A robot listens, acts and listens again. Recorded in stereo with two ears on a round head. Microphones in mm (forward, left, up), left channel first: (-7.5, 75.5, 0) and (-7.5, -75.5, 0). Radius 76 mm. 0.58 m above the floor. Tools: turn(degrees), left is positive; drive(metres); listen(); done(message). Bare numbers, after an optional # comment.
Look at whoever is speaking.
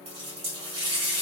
listen()
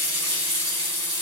listen()
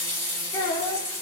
# The child speaking: about 15° left or 165° left.
turn(15)
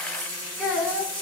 done("Facing the child speaking.")